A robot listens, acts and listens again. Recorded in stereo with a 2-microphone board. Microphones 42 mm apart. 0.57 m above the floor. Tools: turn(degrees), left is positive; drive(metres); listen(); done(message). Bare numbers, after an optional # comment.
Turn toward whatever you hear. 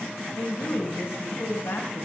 # The woman speaking: about 70° left or 110° left.
turn(70)
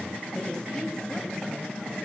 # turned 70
listen()
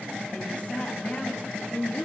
# So it is at 35° left.
turn(35)
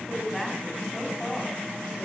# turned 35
# The woman speaking is now 10° left.
turn(10)
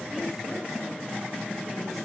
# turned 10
listen()
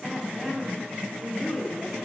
done("Found it: a woman speaking, straight ahead, over 4 m away.")